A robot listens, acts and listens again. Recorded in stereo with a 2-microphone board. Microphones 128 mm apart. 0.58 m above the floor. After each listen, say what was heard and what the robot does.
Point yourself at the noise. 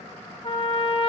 The trumpet: about 45° left or 135° left. Turn 45° left.
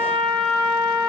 Found it: a trumpet, straight ahead.